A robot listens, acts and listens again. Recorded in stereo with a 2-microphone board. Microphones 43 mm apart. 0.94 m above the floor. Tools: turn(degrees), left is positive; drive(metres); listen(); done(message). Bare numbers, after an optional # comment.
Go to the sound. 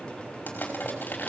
# The crushing: about 50° left or 130° left.
turn(50)
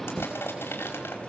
# So it is at 80° left.
turn(80)
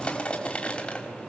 # The crushing is now 30° left.
turn(30)
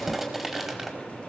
drive(1.0)
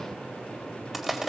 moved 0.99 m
drive(1.0)
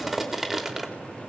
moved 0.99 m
drive(1.0)
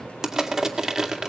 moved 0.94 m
# The crushing is now 10° right.
turn(-10)
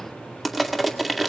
drive(1.0)
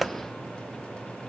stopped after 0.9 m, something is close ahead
done("Arrived at the crushing, straight ahead.")